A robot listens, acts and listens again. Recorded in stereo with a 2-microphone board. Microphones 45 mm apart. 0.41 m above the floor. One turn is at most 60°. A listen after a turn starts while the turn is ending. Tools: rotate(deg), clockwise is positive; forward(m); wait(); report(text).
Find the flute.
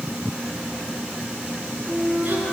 rotate(30)
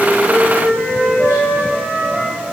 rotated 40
rotate(60)
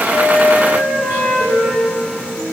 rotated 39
rotate(60)
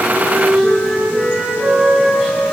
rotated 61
rotate(30)
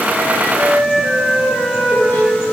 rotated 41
rotate(-10)
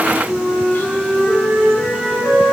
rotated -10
report("Found it: a flute, straight ahead, over 4 m away.")